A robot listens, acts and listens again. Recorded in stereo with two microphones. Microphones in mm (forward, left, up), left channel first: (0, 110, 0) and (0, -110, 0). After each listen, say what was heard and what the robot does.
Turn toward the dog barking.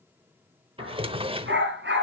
The dog barking: about 55° right or 125° right. Turn 55° right.
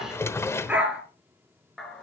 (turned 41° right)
Found it: a dog barking, straight ahead.